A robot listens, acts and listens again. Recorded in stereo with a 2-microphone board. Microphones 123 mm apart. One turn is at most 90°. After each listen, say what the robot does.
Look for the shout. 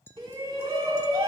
Turn 40° right.
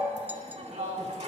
Turn 90° right.
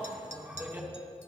Turn 25° right.
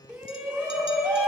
Turn 25° right.
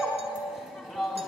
Facing the shout.